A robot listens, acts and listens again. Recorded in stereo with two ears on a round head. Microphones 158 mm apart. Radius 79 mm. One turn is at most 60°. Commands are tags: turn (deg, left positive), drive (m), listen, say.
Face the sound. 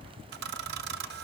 <turn deg="-60"/>
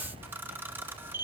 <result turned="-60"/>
<turn deg="-15"/>
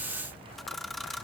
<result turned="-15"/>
<say>Found it: a camera shutter, straight ahead, under 1 m away.</say>